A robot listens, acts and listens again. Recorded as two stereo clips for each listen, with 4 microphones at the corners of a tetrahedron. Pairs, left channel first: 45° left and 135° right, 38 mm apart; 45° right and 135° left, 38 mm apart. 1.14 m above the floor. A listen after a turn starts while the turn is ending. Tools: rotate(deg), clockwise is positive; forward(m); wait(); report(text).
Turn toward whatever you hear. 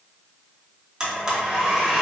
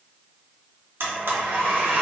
rotate(-150)
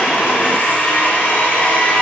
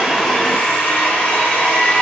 report("Facing the blender.")